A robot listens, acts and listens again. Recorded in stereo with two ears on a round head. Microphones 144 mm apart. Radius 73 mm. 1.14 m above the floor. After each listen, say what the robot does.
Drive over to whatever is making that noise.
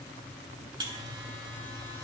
Turn 30° right.
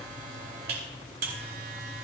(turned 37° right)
Turn 115° right.
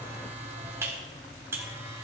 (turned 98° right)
Turn 15° right.
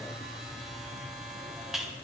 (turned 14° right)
Drive 1.0 m forward.
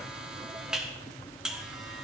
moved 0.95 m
Drive 1.0 m forward.
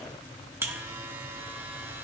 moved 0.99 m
Turn 15° right.
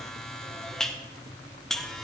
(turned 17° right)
Drive 1.0 m forward.
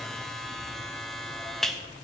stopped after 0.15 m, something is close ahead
I am next to the buzzer.